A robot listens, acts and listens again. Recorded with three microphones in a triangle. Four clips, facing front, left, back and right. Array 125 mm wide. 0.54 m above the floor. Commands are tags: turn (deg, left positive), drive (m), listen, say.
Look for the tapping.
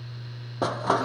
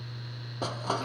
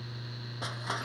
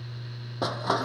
<listen/>
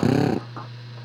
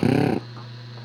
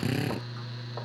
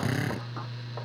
<listen/>
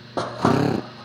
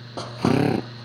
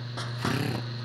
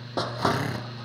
<say>I can't make out tapping, only a drill and crushing.</say>